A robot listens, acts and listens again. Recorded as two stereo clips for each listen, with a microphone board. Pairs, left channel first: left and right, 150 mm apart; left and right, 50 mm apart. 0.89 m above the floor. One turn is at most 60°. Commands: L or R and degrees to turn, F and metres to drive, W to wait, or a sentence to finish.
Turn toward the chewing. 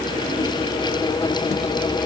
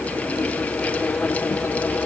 W
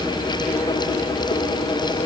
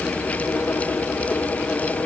W
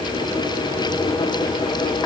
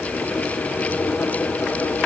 I can't make out chewing to turn to.